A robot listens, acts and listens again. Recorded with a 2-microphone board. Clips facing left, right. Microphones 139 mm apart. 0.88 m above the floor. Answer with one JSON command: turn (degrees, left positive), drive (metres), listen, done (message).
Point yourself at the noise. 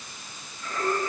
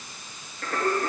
{"turn": -70}
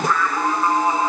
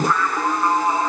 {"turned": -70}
{"turn": 10}
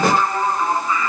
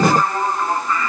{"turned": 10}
{"turn": 10}
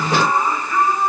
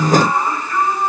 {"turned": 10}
{"done": "Found it: singing, straight ahead."}